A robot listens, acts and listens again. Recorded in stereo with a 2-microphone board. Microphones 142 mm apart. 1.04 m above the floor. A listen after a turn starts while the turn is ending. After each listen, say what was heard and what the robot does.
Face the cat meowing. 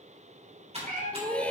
The cat meowing: about 70° right or 110° right. Turn 70° right.
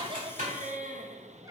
Keep listening.
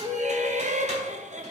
Keep listening.
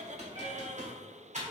I heard a cat meowing, but can't make it out now. It was about straight ahead or 40° right.